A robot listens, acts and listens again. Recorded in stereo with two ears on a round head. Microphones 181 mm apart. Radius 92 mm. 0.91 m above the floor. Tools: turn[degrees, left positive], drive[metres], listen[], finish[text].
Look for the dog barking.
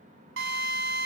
Action: listen[]
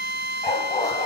Thought: The dog barking: about 15° left or 165° left.
Action: turn[15]
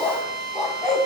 Action: turn[30]
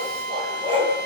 Thought: So it is at 25° right.
Action: turn[-25]
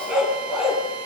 Action: finish[Found it: a dog barking, straight ahead.]